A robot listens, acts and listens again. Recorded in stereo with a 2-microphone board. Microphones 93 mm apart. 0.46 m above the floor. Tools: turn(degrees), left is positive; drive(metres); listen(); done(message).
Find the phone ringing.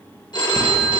turn(degrees=55)
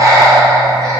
listen()
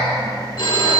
turn(degrees=60)
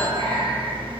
listen()
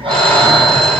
listen()
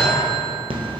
done("I heard a phone ringing from this way, but can't make it out now.")